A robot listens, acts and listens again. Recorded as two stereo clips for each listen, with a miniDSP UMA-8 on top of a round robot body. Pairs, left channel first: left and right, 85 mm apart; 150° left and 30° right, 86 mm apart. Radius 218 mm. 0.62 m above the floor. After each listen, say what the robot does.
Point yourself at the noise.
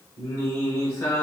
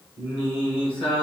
Turn 155° left.
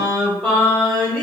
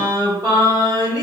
Turn 20° left.
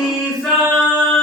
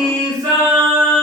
Facing the singing, 2 to 4 m away.